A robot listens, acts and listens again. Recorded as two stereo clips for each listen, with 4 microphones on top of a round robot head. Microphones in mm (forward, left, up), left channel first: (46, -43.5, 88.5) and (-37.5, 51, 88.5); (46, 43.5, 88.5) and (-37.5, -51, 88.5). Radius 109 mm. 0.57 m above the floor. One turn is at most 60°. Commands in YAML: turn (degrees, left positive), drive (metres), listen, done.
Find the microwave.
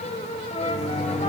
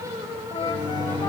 turn: -60
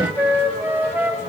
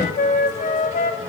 turn: -20
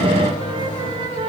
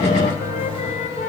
done: "Found it: a microwave, straight ahead."